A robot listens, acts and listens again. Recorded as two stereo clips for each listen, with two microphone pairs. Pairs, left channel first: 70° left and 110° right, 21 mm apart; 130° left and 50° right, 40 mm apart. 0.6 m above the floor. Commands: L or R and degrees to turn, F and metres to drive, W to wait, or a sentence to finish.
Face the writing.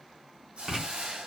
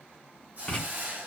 R165
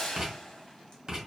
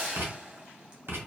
R60
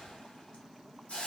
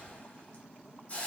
W
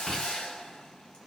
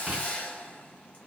W
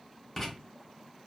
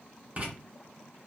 Found it: writing, straight ahead, 1 to 2 m away.